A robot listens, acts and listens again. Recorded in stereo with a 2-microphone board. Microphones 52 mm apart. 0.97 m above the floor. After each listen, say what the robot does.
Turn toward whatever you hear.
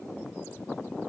Keep listening.
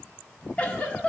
Turn 25° left.
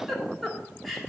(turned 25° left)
Found it: a giggle, straight ahead, 1 to 2 m away.